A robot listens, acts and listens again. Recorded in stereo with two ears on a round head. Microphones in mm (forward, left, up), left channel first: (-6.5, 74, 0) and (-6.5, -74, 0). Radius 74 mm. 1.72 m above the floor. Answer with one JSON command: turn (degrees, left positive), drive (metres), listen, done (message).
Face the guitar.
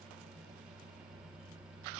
{"listen": true}
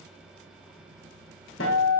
{"turn": 90}
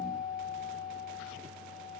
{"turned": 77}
{"turn": 10}
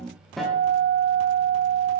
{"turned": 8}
{"done": "Facing the guitar."}